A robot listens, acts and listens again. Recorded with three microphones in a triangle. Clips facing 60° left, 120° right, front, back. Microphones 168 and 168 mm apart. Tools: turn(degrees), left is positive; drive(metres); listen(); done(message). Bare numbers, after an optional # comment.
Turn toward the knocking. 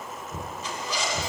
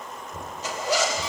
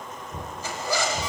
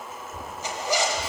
# The knocking: 80° left.
turn(80)
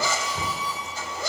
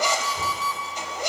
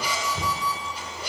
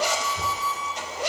done("Facing the knocking.")